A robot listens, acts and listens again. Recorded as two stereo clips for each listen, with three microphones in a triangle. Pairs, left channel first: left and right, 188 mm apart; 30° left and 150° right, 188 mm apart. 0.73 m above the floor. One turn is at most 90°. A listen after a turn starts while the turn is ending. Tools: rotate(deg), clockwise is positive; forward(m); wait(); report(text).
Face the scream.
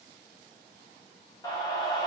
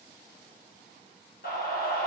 rotate(-25)
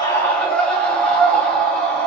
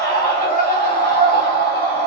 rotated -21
report("Found it: a scream, straight ahead, under 1 m away.")